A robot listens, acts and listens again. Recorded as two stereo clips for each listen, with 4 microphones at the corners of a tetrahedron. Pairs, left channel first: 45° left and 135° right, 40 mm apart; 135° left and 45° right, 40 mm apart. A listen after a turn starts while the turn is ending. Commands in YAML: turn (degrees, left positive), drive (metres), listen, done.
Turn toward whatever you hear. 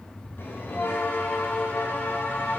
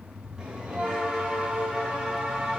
turn: 25
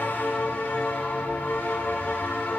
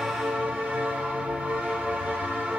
done: "Found it: a bell, straight ahead."